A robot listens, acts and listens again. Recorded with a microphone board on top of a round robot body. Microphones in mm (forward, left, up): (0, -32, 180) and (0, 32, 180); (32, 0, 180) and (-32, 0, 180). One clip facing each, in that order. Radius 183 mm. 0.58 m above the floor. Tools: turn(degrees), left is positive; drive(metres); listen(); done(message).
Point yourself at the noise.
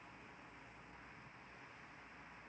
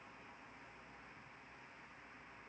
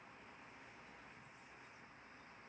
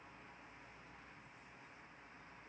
listen()
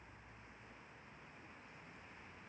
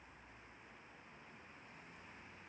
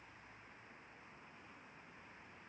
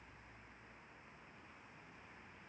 listen()
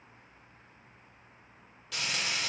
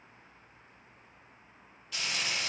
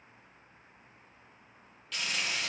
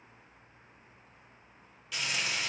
turn(degrees=-95)
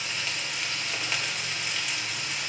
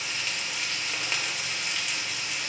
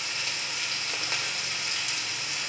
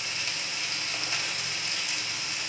done("Facing the frying, 2 to 4 m away.")